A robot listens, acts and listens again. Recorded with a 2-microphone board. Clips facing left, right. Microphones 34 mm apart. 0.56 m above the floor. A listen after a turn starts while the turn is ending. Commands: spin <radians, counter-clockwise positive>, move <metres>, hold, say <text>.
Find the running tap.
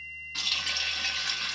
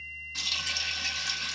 spin 0.44
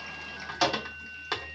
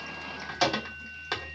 say Found it: a running tap, straight ahead, under 1 m away.